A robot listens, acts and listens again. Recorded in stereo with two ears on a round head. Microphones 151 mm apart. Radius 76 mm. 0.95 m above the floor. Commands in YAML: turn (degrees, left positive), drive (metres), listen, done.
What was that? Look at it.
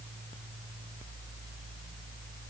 listen: true
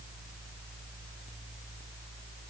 listen: true
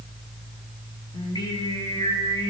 turn: 25
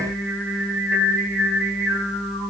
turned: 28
done: "Facing the singing."